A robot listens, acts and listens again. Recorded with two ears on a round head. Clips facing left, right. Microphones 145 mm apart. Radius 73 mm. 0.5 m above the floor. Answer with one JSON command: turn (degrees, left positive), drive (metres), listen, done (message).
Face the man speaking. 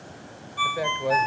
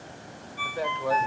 {"turn": 20}
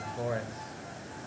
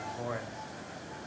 {"turn": 140}
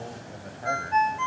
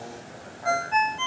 {"listen": true}
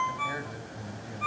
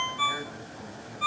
{"turn": 25}
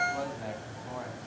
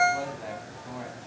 {"done": "Found it: a man speaking, straight ahead."}